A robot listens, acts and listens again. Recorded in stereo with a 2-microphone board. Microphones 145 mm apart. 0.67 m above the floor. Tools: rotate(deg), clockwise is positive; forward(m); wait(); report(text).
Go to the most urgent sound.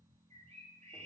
wait()
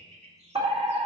rotate(40)
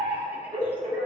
rotate(90)
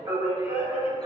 rotate(30)
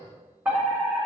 rotate(15)
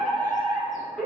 forward(1.0)
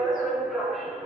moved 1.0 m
forward(1.0)
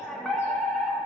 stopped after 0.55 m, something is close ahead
report("I am next to the fire alarm.")